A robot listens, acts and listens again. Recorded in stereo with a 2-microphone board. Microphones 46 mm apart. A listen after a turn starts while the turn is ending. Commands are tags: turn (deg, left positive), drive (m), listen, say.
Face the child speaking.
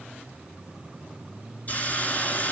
<listen/>
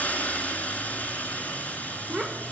<turn deg="30"/>
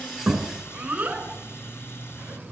<turn deg="-30"/>
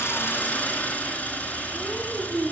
<say>Found it: a child speaking, straight ahead.</say>